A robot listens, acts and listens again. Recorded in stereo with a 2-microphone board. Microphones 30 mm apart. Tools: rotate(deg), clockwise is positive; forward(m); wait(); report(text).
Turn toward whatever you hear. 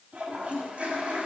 rotate(55)
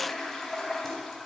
report("Found it: a toilet flushing, straight ahead, 2 to 4 m away.")